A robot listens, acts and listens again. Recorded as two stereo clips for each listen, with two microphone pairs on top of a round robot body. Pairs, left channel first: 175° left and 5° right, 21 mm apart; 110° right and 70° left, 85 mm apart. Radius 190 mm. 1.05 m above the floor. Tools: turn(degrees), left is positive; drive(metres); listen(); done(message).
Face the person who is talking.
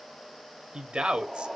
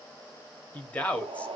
turn(degrees=-40)
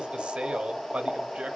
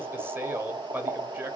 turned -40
done("Found it: a man speaking, straight ahead.")